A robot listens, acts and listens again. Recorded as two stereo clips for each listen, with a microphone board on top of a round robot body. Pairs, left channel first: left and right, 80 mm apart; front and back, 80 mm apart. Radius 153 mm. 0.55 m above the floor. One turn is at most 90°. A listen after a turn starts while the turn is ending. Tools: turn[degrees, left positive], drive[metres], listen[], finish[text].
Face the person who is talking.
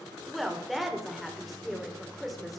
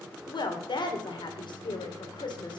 Action: finish[Found it: a woman speaking, straight ahead, 2 to 4 m away.]